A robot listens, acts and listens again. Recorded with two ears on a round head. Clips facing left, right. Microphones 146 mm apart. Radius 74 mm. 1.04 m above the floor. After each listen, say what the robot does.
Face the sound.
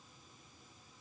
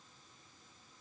Keep listening.
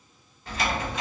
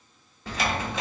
Turn 60° right.
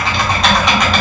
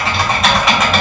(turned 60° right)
Found it: typing on a keyboard, straight ahead, under 1 m away.